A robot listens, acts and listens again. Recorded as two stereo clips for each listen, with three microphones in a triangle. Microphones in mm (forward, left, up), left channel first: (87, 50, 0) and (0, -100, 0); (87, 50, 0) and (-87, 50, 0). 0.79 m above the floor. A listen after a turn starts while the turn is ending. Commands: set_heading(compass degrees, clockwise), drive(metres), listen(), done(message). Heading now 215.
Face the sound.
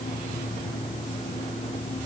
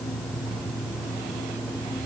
listen()
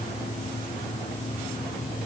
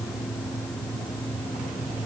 listen()
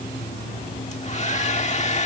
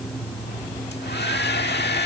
set_heading(205)
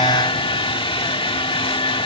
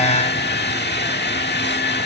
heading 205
done("Facing the hair dryer.")